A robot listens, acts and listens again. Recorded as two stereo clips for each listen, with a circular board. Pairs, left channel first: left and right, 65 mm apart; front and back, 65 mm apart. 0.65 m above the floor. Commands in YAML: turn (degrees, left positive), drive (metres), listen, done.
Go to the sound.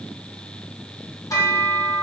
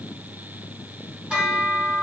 turn: 105
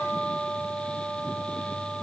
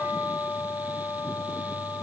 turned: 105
turn: 10
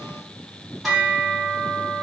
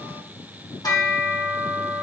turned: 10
drive: 1.0
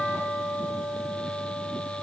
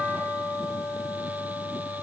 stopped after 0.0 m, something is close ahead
done: "Something is in my way. I am facing the bell but have not reached it."